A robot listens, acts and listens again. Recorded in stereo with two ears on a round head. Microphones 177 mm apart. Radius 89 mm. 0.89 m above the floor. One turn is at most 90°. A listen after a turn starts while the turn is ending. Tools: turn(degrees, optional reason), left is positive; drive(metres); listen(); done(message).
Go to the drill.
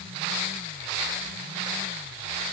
listen()
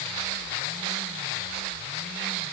listen()
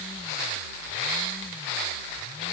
done("I can't make out a drill to turn to.")